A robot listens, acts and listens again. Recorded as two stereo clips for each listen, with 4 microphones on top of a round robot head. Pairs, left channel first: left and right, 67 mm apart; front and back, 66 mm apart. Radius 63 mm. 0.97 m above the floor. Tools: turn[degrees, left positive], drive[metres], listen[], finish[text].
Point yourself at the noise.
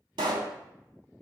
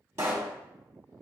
Thought: The pop: 120° right.
Action: turn[-120]
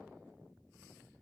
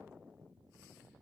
Action: finish[I heard a pop from this way, but can't make it out now.]